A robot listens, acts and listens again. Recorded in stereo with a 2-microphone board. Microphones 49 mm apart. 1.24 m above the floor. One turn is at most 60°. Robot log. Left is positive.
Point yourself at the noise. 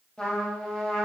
note: The trumpet: about 20° left or 160° left.
cmd yaw +20
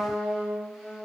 end: Found it: a trumpet, straight ahead.